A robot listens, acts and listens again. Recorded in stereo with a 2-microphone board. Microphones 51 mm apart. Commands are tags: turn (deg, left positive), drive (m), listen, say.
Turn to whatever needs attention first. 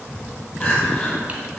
<turn deg="15"/>
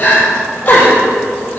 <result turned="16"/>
<turn deg="150"/>
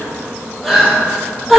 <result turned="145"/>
<say>Facing the crying, 2 to 4 m away.</say>